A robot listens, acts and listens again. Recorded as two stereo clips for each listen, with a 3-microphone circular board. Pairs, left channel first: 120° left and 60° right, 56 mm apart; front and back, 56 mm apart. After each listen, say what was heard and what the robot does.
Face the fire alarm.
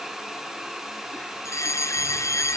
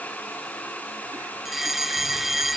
The fire alarm: 95° left. Turn 95° left.
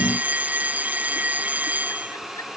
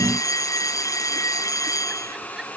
Facing the fire alarm.